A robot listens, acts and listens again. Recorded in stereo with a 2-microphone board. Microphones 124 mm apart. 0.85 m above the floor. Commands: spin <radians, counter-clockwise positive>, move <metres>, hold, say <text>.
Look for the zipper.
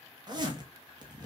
spin -0.61
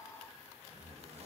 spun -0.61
hold
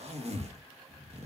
spin -1.75
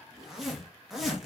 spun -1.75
say Facing the zipper.